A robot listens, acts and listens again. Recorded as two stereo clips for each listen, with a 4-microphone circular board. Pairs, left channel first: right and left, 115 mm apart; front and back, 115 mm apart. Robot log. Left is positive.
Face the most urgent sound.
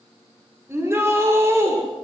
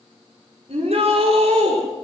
note: The shout: 155° left.
cmd yaw +155
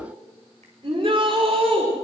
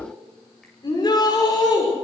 note: The shout is now 50° left.
cmd yaw +50
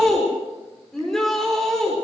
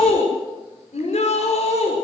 end: Found it: a shout, straight ahead, over 4 m away.